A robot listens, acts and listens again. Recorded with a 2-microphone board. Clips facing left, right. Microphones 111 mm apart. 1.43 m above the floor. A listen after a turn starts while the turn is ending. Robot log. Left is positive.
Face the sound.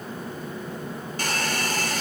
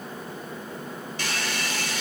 note: The hair dryer: about 45° left or 135° left.
cmd yaw +45
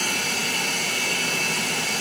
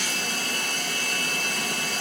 note: So it is at 90° left.
cmd yaw +90
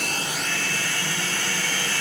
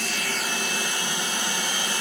note: The hair dryer is now 20° right.
cmd yaw -20
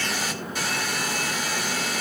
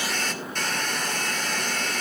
end: Facing the hair dryer, 2 to 4 m away.